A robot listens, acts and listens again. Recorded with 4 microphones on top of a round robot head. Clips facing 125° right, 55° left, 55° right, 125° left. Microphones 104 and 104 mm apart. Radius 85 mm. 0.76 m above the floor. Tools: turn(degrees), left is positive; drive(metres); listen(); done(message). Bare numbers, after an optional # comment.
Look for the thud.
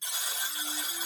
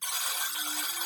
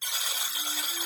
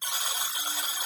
listen()
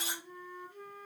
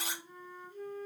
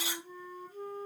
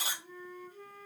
listen()
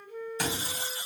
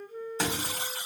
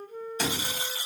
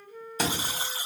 # The thud: 120° left.
turn(120)
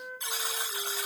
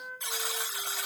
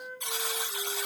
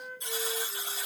done("Facing where the thud came from. I can't hear it now.")